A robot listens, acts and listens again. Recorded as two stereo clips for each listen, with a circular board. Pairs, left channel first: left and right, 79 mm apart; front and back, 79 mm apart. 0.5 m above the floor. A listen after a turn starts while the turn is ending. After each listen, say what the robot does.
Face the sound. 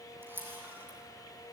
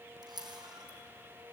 Turn 155° right.
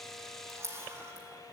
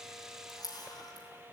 Turn 35° right.
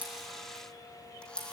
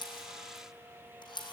Turn 10° left.
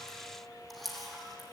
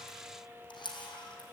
Found it: a camera shutter, straight ahead.